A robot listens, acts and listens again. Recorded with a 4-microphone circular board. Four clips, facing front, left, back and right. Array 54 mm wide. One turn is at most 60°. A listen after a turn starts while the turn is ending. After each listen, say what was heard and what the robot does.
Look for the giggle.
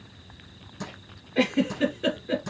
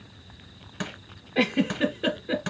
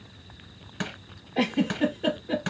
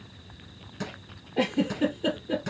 The giggle: 75° left. Turn 60° left.
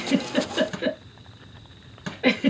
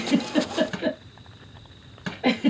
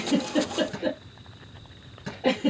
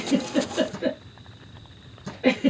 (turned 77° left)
Found it: a giggle, straight ahead, 2 to 4 m away.